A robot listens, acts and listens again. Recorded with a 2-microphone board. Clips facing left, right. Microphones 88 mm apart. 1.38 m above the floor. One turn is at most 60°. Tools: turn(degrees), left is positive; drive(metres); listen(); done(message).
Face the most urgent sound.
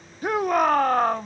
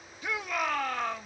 turn(degrees=45)
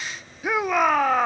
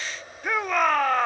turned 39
done("Facing the shout.")